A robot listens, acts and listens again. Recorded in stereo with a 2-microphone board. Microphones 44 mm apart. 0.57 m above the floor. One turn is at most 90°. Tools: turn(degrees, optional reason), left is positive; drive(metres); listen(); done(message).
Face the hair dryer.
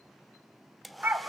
turn(degrees=30)
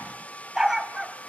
turn(degrees=90, reason="So it is at 150° left.")
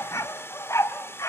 turn(degrees=60, reason="The hair dryer is now 60° left.")
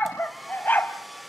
done("Found it: a hair dryer, straight ahead.")